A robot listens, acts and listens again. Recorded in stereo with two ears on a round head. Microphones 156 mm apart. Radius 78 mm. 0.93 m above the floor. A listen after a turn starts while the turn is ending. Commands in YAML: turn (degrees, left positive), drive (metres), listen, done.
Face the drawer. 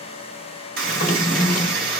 turn: 50
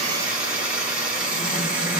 listen: true
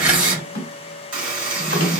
turn: 70
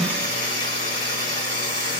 listen: true
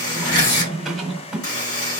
done: "Facing the drawer, 1 to 2 m away."